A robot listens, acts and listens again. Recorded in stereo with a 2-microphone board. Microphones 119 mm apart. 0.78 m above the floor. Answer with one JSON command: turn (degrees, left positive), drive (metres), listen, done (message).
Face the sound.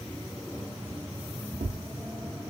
{"turn": -90}
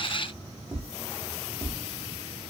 {"done": "Facing the tapping, under 1 m away."}